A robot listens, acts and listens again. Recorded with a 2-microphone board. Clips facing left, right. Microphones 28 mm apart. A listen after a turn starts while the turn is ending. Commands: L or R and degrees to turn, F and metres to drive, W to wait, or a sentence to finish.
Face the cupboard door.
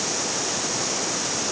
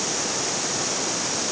W
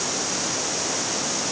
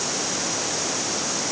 W
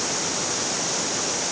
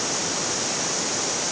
I can't make out a cupboard door to turn to.